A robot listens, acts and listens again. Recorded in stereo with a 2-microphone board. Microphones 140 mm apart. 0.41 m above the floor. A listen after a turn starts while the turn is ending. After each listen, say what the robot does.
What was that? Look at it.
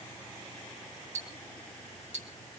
Turn 65° right.
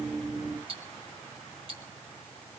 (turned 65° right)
Turn 45° right.
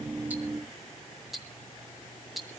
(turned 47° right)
Found it: ticking, straight ahead.